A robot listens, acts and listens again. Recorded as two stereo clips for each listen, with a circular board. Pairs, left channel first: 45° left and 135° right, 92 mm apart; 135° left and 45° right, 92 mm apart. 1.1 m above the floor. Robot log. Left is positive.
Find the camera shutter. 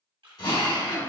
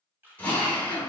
note: The camera shutter: 110° right.
cmd yaw -110
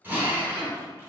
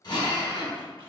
cmd idle
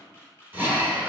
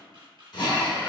note: The camera shutter is now 15° right.
cmd yaw -15
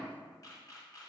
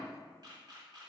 end: Facing the camera shutter.